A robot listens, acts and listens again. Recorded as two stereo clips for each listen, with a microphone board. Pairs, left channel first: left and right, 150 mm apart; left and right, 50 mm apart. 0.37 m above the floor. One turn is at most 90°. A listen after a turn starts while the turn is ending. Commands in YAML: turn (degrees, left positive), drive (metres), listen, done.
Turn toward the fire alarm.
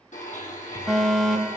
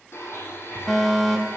turn: 30
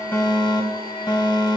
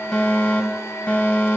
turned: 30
turn: 90
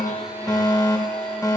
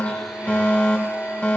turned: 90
turn: 25
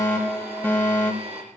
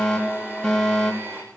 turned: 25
turn: 15
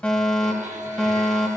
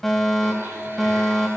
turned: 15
done: "Found it: a fire alarm, straight ahead."